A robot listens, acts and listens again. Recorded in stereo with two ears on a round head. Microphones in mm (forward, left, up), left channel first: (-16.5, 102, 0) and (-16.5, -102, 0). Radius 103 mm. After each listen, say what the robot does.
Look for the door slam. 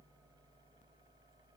Keep listening.
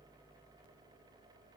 Keep listening.
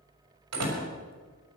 Turn 90° right.
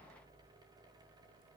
Facing where the door slam came from. I can't hear it now.